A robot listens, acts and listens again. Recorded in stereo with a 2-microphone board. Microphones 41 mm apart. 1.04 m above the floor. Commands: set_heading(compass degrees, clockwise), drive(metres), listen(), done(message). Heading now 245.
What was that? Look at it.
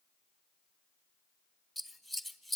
set_heading(215)
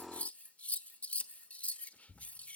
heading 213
set_heading(63)
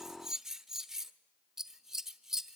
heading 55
set_heading(65)
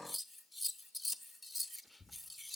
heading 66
done("Found it: scissors, straight ahead, 1 to 2 m away.")